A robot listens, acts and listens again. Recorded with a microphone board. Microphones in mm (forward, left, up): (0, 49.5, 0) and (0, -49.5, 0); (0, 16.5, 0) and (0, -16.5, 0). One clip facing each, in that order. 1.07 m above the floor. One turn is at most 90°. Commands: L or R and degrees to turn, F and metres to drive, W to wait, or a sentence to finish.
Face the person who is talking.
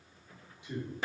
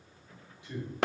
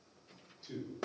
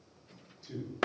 L15
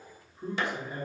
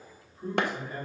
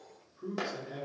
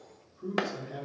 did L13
L15
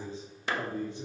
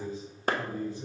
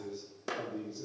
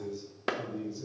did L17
L20
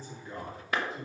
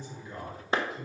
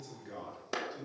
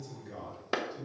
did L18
L30
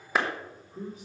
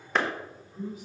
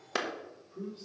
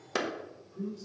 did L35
L90
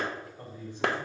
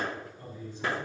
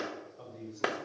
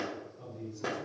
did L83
L50
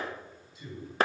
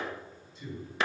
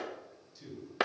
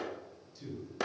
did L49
Found it: a man speaking, straight ahead, 2 to 4 m away.